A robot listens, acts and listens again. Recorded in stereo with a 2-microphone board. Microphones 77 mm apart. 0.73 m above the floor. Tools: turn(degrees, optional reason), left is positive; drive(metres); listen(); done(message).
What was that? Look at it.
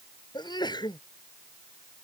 turn(degrees=70, reason="The sneeze: about 70° left or 110° left.")
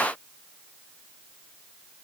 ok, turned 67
listen()
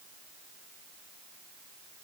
done("I heard a sneeze, but can't make it out now. It was about straight ahead or 45° left.")